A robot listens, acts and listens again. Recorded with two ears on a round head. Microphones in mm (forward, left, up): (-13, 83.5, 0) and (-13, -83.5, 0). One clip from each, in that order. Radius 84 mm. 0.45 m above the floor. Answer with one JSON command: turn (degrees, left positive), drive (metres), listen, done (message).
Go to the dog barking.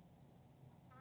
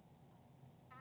{"listen": true}
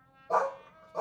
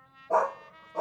{"turn": 90}
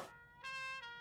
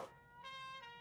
{"listen": true}
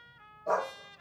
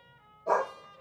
{"drive": 1.0}
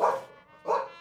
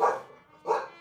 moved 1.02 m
{"drive": 1.0}
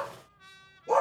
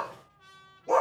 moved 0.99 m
{"drive": 1.0}
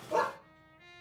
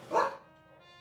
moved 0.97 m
{"drive": 1.0}
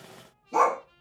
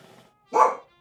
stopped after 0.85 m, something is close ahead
{"done": "I am next to the dog barking."}